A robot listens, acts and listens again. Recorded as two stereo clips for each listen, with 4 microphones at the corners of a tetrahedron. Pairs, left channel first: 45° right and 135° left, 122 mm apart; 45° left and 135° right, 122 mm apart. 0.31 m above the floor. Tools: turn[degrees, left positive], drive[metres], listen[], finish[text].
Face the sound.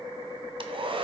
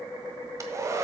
Thought: The hair dryer: 165° left.
Action: turn[165]
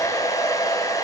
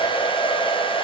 Thought: The hair dryer is now 10° left.
Action: turn[10]
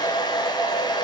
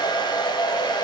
Action: finish[Found it: a hair dryer, straight ahead.]